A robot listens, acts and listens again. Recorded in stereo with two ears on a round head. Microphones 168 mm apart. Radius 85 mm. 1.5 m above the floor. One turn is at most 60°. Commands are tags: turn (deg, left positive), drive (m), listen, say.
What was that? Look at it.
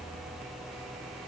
<listen/>
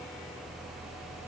<listen/>
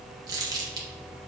<turn deg="-20"/>
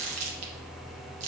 <turn deg="-60"/>
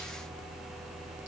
<turn deg="-60"/>
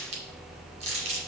<turn deg="-35"/>
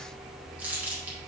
<turn deg="-10"/>
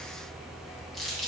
<say>Found it: crumpling, straight ahead, 1 to 2 m away.</say>